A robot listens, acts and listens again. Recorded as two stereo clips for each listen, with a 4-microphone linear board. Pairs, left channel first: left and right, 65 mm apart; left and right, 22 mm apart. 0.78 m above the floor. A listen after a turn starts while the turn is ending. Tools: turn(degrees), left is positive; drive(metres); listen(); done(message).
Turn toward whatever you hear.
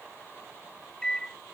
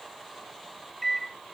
turn(degrees=30)
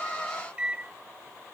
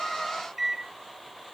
turn(degrees=-20)
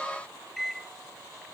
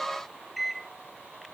done("Facing the microwave.")